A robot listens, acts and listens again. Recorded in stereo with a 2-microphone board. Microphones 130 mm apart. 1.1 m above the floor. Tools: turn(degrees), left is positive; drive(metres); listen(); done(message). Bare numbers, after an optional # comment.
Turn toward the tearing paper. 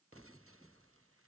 listen()
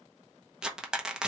turn(-30)
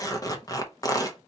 # So it is at 30° left.
turn(30)
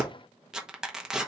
done("Facing the tearing paper, under 1 m away.")